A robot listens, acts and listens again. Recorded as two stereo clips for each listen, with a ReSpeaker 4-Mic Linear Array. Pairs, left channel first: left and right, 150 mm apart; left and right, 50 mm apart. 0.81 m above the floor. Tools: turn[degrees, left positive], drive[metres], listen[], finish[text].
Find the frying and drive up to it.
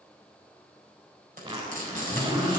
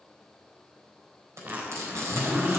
Thought: The frying: about 70° right or 110° right.
Action: turn[-70]
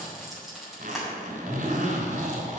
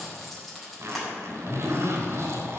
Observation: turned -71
Action: drive[1.0]
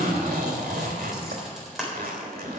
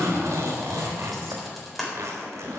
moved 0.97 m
Action: drive[1.0]
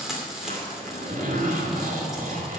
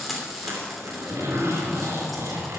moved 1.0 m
Action: drive[1.0]
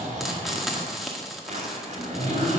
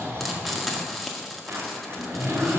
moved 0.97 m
Action: drive[1.0]
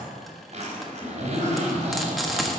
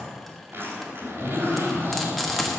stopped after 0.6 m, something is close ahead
Action: listen[]
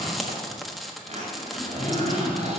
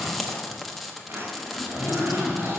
Action: finish[Arrived at the frying, straight ahead.]